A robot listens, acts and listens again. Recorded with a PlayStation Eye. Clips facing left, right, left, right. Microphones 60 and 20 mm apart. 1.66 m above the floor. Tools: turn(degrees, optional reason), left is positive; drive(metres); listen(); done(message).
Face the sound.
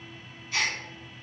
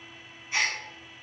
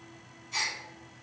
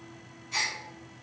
turn(degrees=-20, reason="The gasp: about 20° right or 160° right.")
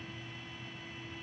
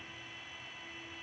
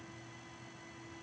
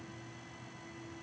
listen()
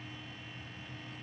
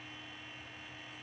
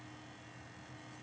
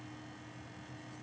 done("I heard a gasp, but can't make it out now. It was about straight ahead or 140° right.")